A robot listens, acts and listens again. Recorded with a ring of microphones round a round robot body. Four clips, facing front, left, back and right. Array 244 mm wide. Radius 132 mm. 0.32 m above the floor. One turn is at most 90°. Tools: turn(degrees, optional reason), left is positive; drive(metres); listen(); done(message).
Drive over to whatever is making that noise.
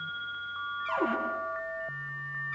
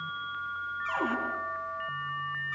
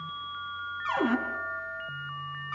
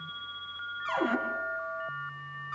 turn(degrees=-90, reason="The cupboard door: 175° right.")
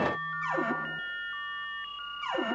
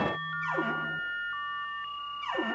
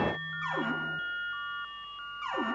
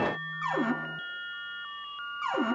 turn(degrees=-90, reason="The cupboard door is now 90° right.")
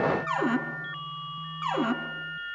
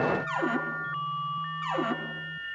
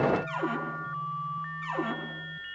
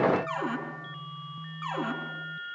drive(metres=1.0)
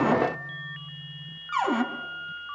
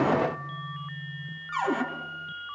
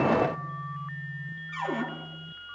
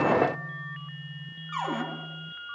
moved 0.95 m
drive(metres=1.0)
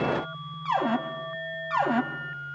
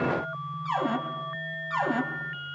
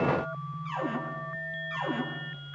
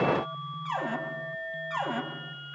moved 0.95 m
turn(degrees=10, reason="The cupboard door is now 10° left.")
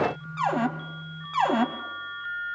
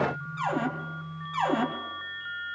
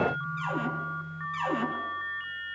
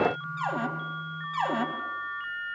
drive(metres=1.0)
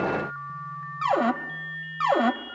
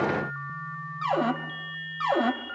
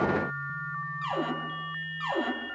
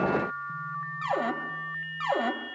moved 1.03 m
drive(metres=1.0)
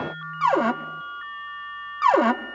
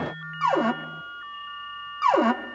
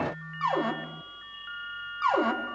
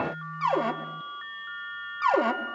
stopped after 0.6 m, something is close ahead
turn(degrees=10, reason="The cupboard door is now 10° left.")
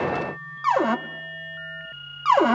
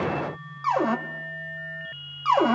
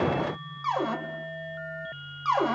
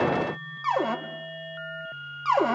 done("Arrived at the cupboard door, straight ahead.")